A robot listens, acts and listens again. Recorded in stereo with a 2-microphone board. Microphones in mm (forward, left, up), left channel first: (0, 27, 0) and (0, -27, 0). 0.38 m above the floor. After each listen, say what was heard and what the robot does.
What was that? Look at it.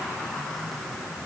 Keep listening.
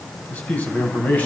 The man speaking: about 30° left or 150° left. Turn 30° left.
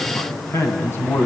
So it is at 125° left. Turn 125° left.
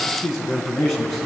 Found it: a man speaking, straight ahead, over 4 m away.